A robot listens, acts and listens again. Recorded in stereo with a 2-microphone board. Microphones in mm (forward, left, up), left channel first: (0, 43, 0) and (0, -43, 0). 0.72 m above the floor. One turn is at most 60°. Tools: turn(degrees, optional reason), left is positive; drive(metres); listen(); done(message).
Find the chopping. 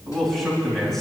listen()
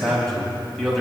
listen()
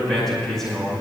done("I can't make out chopping to turn to.")